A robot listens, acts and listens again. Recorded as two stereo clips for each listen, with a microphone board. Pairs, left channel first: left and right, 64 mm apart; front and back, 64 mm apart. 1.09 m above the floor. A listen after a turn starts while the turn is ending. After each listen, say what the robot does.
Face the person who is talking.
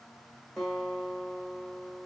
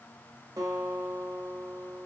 Keep listening.
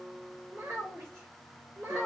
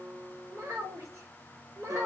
Turn 145° right.
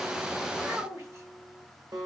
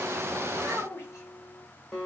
Turn 45° right.
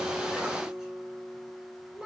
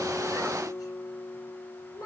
Turn 15° right.
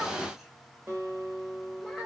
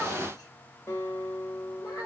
Found it: a child speaking, straight ahead, 2 to 4 m away.